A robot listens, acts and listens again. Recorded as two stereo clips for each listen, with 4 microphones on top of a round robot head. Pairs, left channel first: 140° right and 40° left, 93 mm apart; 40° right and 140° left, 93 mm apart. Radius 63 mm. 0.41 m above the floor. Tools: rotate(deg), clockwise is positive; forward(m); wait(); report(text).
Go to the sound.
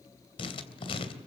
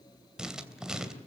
rotate(140)
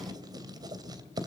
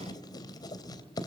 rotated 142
forward(1.0)
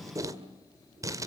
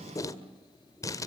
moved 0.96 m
forward(1.0)
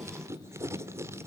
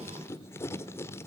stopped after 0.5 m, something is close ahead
report("I am next to the writing.")